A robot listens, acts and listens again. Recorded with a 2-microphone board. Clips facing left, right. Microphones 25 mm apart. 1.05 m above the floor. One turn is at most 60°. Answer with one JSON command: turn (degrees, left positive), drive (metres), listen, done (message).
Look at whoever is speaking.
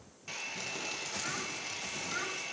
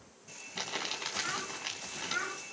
{"turn": -30}
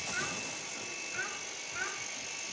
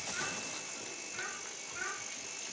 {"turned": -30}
{"turn": 25}
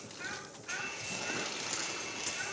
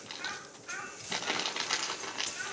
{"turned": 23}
{"done": "Facing the child speaking, over 4 m away."}